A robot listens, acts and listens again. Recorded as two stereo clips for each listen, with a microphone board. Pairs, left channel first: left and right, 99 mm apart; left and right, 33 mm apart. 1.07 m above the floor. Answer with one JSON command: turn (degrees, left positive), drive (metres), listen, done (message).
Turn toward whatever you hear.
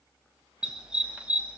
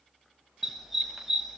{"turn": -30}
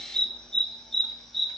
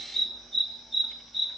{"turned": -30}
{"done": "Found it: a dog barking, straight ahead."}